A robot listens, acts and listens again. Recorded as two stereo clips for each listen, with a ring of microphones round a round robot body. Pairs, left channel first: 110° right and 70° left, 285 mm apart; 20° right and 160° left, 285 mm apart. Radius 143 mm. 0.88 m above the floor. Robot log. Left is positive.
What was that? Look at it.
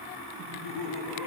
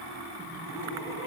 note: The laughter: 80° left.
cmd yaw +80
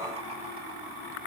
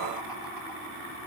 cmd idle
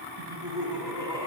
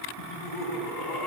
note: The laughter is now 10° right.
cmd yaw -10
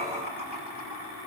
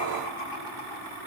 end: Found it: laughter, straight ahead, over 4 m away.